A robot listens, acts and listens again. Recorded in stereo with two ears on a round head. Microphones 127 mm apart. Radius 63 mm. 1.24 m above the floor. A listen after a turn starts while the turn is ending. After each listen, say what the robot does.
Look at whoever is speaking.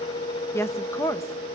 Turn 20° left.
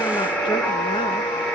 Keep listening.
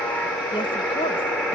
Keep listening.
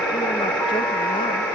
I heard a woman speaking, but can't make it out now. It was about straight ahead or 140° left.